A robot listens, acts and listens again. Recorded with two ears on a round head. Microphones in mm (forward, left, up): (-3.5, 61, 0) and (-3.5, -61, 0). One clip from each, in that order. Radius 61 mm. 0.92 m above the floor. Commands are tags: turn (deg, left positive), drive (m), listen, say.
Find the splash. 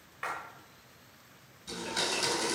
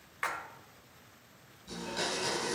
<turn deg="-40"/>
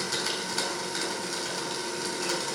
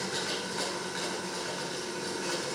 <listen/>
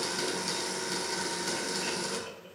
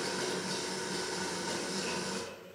<say>I heard a splash, but can't make it out now. It was about straight ahead or 100° right.</say>